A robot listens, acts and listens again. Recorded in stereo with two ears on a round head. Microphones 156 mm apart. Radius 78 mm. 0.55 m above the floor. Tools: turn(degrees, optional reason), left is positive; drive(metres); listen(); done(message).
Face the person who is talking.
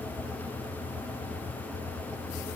listen()
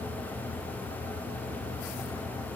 listen()
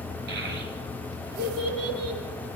turn(degrees=-65, reason="The child speaking: about 65° right or 115° right.")
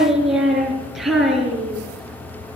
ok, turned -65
done("Found it: a child speaking, straight ahead, over 4 m away.")